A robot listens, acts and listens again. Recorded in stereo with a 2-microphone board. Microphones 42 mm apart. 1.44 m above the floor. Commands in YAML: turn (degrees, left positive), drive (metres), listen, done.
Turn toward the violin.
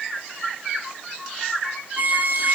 turn: -40
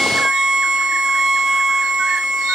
turn: -15
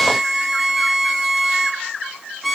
done: "Found it: a violin, straight ahead, 1 to 2 m away."